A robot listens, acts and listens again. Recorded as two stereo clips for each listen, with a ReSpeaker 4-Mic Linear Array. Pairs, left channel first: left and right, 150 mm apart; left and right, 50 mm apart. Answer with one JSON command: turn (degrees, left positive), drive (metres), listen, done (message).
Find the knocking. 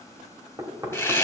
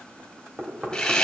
{"turn": -25}
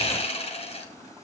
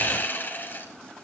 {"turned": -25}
{"listen": true}
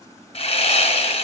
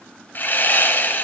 {"listen": true}
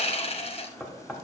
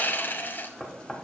{"done": "Found it: knocking, straight ahead, 1 to 2 m away."}